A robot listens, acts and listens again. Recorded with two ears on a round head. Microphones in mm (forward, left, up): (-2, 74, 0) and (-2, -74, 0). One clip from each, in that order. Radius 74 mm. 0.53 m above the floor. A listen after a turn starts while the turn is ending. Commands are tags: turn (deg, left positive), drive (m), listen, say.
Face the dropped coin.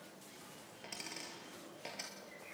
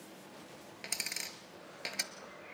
<turn deg="-65"/>
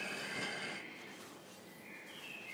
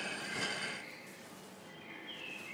<listen/>
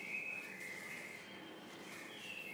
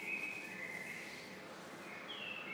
<say>I heard a dropped coin, but can't make it out now. It was about straight ahead or 50° right.</say>